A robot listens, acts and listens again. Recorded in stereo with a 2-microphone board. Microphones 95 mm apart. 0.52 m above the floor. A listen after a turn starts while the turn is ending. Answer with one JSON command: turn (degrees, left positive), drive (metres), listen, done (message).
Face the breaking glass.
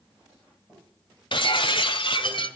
{"turn": 60}
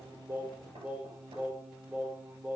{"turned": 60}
{"listen": true}
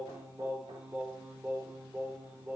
{"done": "I heard breaking glass, but can't make it out now. It was about straight ahead or 60° left."}